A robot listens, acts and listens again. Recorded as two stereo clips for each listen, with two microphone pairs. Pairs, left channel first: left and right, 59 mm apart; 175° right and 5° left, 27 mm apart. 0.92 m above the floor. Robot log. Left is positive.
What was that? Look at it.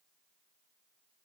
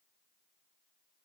cmd idle
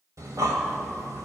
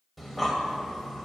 note: The breathing: 80° right.
cmd yaw -80
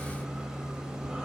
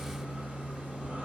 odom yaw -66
note: The breathing is now 15° right.
cmd yaw -15
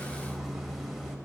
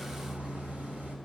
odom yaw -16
end: Facing the breathing, 1 to 2 m away.